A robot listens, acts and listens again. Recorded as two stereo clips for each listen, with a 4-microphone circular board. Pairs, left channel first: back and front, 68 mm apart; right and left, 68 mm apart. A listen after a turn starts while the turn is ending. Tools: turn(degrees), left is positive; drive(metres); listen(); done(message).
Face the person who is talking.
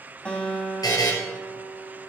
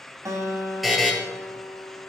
listen()
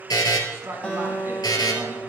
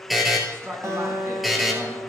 turn(degrees=45)
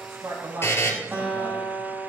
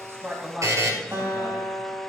turn(degrees=15)
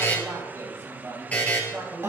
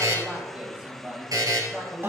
turn(degrees=30)
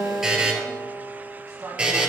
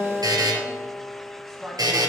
done("Facing the man speaking, 2 to 4 m away.")